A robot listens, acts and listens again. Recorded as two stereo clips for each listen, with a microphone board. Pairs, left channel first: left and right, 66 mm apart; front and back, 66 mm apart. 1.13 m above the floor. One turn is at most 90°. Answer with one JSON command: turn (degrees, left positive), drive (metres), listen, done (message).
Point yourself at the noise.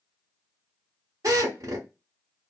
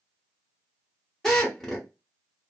{"turn": -85}
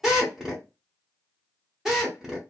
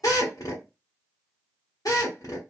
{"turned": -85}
{"done": "Facing the drill, 1 to 2 m away."}